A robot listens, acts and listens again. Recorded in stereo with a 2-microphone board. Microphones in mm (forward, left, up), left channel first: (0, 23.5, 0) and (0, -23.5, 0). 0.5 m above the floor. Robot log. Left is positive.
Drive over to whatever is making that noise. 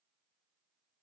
cmd idle
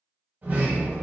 note: The sliding door: about 35° right or 145° right.
cmd yaw -35
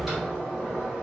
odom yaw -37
cmd fwd 1.0
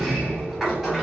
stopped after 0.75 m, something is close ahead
end: I am next to the sliding door.